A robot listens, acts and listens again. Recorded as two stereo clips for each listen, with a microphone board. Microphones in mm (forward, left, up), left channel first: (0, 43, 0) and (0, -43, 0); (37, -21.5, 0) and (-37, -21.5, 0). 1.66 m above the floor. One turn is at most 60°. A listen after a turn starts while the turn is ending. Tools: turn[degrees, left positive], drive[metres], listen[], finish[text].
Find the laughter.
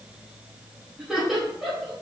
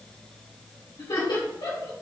Action: finish[Facing the laughter.]